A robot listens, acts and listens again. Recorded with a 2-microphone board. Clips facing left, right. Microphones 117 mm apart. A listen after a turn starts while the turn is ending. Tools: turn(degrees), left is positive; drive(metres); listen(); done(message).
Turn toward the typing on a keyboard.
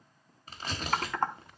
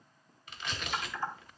turn(degrees=60)
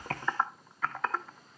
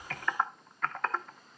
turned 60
done("Found it: typing on a keyboard, straight ahead, under 1 m away.")